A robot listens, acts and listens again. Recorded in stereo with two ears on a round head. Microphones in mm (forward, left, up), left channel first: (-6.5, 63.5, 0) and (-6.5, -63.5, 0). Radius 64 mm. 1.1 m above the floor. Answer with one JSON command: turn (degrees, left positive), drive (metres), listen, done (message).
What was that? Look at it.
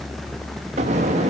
{"turn": -50}
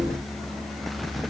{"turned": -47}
{"listen": true}
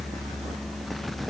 {"done": "I heard an explosion, but can't make it out now. It was about straight ahead or 85° right."}